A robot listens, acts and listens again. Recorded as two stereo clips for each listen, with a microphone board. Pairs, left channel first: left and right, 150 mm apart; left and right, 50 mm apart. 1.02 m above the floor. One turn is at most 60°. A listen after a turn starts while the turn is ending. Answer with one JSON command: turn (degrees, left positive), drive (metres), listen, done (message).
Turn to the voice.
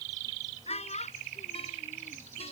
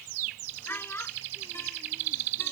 {"turn": 45}
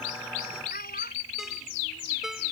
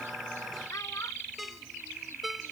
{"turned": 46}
{"listen": true}
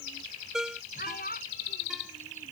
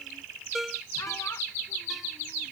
{"turn": 60}
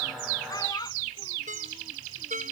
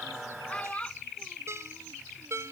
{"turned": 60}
{"turn": 25}
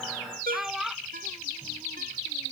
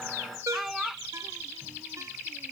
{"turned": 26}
{"done": "Found it: a child speaking, straight ahead."}